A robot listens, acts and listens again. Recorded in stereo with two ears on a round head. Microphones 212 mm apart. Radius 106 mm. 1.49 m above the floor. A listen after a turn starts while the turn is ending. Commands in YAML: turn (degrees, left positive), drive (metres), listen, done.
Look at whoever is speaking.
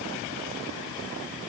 listen: true
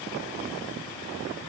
listen: true
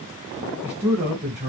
turn: -30
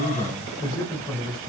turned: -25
turn: 20
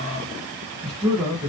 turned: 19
done: "Found it: a man speaking, straight ahead, 1 to 2 m away."